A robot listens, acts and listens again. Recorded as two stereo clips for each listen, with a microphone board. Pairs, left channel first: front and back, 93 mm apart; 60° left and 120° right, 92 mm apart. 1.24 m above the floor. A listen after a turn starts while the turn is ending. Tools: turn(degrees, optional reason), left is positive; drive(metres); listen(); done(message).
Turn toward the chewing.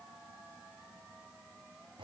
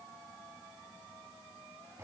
listen()
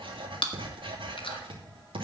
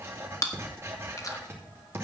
turn(degrees=10, reason="The chewing: 10° left.")
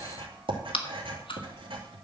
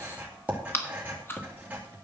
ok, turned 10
done("Found it: chewing, straight ahead, 1 to 2 m away.")